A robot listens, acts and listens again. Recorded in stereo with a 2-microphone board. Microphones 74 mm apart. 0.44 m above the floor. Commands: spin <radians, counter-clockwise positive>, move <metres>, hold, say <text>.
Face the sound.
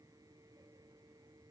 hold
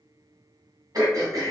spin -1.13
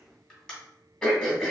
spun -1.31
spin 0.17
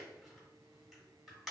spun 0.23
say Facing the throat clearing, 1 to 2 m away.